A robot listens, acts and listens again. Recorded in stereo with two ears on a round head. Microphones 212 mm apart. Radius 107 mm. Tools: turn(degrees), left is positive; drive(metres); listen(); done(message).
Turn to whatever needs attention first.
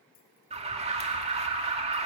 turn(degrees=-30)
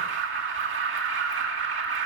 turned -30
turn(degrees=-120)
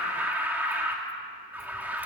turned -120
turn(degrees=-10)
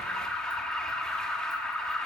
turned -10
done("Facing the alarm, 2 to 4 m away.")